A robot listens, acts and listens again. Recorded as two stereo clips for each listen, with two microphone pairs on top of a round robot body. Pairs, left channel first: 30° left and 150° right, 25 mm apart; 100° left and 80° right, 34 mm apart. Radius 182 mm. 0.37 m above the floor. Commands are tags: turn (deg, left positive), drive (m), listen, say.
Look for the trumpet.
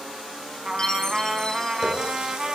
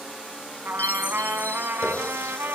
<turn deg="-80"/>
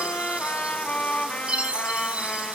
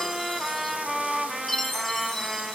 <say>Found it: a trumpet, straight ahead.</say>